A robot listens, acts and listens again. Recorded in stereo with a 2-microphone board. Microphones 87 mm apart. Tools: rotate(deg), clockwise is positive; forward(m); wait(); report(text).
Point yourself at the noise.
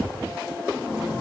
wait()
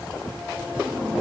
wait()
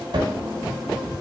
rotate(60)
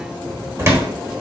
rotate(40)
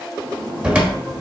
rotate(15)
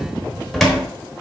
report("Facing the cupboard door.")